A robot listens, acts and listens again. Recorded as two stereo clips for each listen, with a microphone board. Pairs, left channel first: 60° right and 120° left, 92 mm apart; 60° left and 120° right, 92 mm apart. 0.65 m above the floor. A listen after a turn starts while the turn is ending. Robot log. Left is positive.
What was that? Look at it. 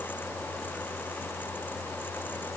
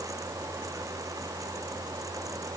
cmd idle
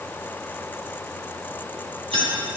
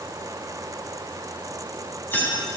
note: The keys jangling: 125° left.
cmd yaw +125
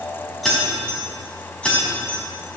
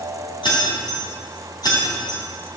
note: The keys jangling is now 20° left.
cmd yaw +20
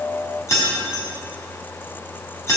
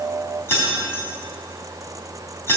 end: Found it: keys jangling, straight ahead.